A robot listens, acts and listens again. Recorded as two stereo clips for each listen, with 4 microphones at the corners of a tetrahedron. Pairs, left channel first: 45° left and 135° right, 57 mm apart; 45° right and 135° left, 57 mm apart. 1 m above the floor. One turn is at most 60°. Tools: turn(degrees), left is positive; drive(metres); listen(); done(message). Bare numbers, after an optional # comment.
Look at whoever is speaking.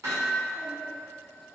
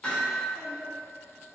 # The child speaking: 65° right.
turn(-60)
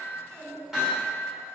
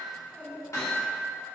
# The child speaking is now 15° right.
turn(-15)
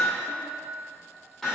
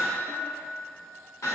listen()
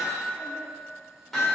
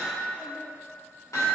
# The child speaking is now 35° right.
turn(-35)
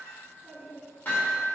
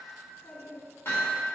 # The child speaking is now 10° right.
turn(-10)
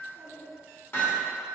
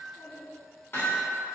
done("Facing the child speaking, 2 to 4 m away.")